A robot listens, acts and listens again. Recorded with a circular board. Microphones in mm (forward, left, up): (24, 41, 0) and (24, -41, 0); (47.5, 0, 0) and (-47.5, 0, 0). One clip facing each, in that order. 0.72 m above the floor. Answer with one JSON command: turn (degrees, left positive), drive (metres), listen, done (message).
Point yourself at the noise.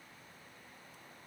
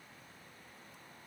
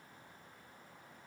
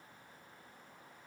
{"listen": true}
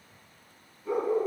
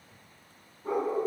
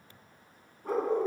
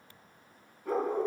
{"turn": -50}
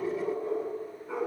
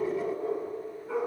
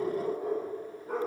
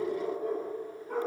{"done": "Facing the dog barking, 2 to 4 m away."}